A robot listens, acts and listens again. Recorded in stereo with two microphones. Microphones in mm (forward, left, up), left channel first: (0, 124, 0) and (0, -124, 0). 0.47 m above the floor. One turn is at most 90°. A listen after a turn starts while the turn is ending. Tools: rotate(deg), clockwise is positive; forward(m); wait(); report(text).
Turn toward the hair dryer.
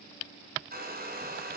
rotate(40)
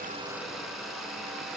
report("Facing the hair dryer.")